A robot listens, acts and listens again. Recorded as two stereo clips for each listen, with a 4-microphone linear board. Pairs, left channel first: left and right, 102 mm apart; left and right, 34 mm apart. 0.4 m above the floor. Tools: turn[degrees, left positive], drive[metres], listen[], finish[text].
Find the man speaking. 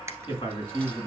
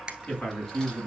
Thought: The man speaking: about 50° left or 130° left.
Action: turn[50]
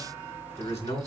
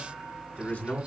Thought: So it is at 75° left.
Action: turn[75]
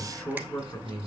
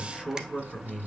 Thought: The man speaking is now 15° left.
Action: turn[15]
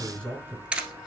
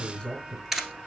Thought: The man speaking is now 15° left.
Action: turn[15]
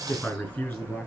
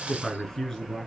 Thought: The man speaking is now 10° left.
Action: turn[10]
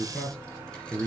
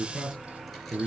Action: finish[Found it: a man speaking, straight ahead, over 4 m away.]